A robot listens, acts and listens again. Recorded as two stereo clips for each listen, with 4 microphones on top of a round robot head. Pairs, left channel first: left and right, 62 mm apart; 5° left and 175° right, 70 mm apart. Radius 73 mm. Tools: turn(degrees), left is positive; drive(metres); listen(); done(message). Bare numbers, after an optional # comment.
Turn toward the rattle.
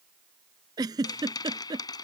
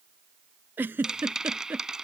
# The rattle: 100° left.
turn(100)
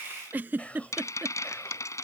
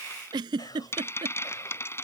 # The rattle is now 55° left.
turn(55)
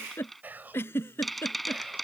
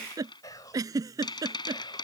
done("Found it: a rattle, straight ahead.")